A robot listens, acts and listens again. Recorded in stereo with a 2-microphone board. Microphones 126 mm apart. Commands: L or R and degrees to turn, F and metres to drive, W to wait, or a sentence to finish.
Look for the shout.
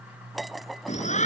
L70
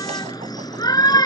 L35
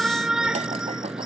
Facing the shout.